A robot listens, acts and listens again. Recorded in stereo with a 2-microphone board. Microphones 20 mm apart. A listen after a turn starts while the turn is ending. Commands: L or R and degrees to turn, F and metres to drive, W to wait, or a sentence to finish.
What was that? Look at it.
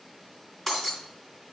L30
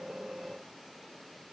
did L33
W
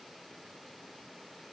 I heard breaking glass, but can't make it out now. It was about 25° right or 140° left.